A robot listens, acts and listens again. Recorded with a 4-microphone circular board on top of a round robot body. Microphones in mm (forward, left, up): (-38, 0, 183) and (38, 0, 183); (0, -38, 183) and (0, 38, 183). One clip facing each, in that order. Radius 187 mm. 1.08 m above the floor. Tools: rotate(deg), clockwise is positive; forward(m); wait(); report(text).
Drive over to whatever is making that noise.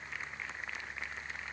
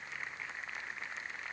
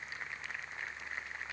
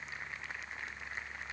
wait()
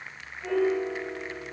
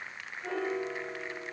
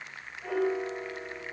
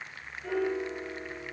rotate(110)
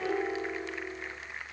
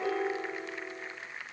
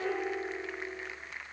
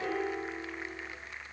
forward(1.0)
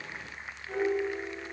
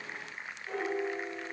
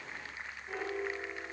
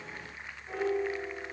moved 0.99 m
rotate(-15)
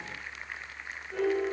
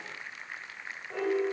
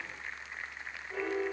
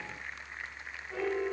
forward(1.0)
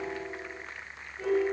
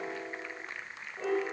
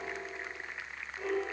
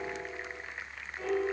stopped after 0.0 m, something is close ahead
report("Arrived at the piano, straight ahead.")